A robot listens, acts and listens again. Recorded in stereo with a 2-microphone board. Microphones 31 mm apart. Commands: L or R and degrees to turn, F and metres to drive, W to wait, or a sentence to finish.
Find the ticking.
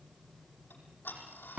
L90
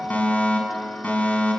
Found it: ticking, straight ahead, over 4 m away.